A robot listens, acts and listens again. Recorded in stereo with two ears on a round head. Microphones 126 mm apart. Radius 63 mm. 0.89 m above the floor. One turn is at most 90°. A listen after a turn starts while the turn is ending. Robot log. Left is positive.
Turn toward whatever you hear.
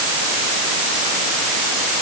cmd idle
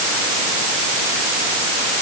cmd idle
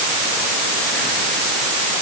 end: I can't make out anything to turn to.